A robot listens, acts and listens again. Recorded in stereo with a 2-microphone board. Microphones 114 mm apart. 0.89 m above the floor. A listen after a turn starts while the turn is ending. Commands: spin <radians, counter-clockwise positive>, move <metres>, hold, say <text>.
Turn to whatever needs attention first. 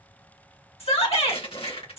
spin 1.22
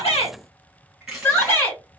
spin 0.44
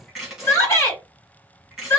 spin 0.52
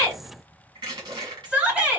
spin -0.17
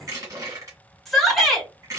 say Found it: a shout, straight ahead.